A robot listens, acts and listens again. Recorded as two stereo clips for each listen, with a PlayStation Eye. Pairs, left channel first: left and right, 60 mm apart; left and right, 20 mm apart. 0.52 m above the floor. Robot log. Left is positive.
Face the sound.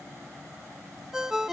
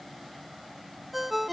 cmd yaw -30
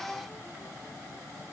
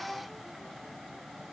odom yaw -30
cmd idle
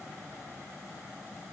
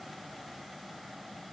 cmd idle
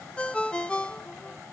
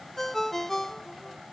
note: So it is at 20° left.
cmd yaw +20
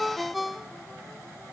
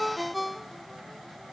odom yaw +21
end: Found it: a ringtone, straight ahead.